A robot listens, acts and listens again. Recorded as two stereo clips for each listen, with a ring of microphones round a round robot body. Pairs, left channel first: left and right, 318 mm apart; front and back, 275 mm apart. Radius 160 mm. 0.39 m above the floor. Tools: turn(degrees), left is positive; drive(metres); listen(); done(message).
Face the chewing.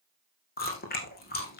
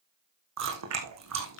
turn(degrees=155)
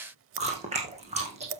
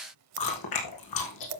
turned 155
turn(degrees=-20)
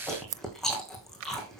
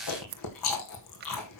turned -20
done("Facing the chewing.")